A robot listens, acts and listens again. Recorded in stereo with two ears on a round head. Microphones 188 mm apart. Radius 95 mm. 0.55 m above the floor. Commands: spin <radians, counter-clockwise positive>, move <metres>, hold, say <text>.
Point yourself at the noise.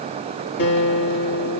spin 0.96
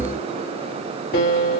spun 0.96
spin 0.96
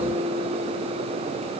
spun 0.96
say Found it: a guitar, straight ahead.